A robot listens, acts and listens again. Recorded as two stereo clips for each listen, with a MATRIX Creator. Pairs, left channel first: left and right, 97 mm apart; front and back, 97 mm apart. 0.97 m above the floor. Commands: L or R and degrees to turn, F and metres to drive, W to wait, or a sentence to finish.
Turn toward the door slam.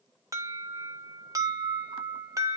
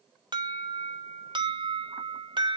W
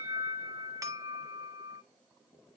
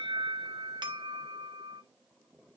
W
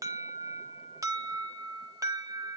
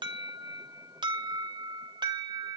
I can't make out a door slam to turn to.